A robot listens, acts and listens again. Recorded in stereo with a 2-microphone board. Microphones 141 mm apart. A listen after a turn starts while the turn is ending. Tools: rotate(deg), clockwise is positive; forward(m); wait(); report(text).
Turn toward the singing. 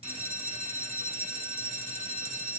wait()
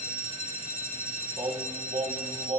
rotate(50)
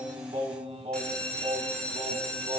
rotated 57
rotate(60)
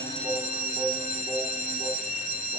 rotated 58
rotate(15)
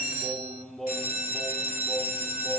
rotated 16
report("Facing the singing.")